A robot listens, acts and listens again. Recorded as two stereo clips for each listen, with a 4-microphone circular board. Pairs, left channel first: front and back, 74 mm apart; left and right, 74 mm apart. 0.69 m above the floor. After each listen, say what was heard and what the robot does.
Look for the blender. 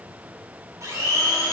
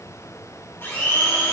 The blender: 140° left. Turn 140° left.
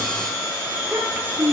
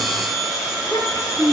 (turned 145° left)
Found it: a blender, straight ahead.